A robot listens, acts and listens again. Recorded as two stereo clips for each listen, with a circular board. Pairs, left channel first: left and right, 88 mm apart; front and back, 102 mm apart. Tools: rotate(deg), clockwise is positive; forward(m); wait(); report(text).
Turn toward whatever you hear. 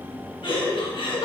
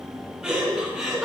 rotate(-95)
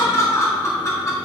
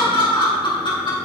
rotate(-35)
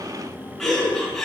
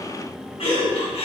report("Found it: laughter, straight ahead.")